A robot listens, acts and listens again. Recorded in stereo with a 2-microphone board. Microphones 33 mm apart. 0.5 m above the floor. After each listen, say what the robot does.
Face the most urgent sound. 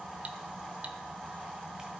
Keep listening.
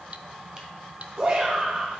Turn 45° right.
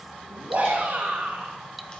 Turn 90° right.
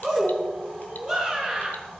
Found it: a shout, straight ahead.